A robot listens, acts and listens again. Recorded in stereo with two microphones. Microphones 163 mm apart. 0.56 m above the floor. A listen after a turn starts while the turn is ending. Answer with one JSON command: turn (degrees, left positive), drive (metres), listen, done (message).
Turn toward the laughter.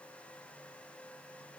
{"listen": true}
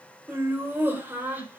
{"turn": -30}
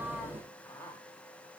{"turn": 15}
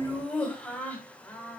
{"turn": 10}
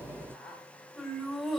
{"done": "Found it: laughter, straight ahead."}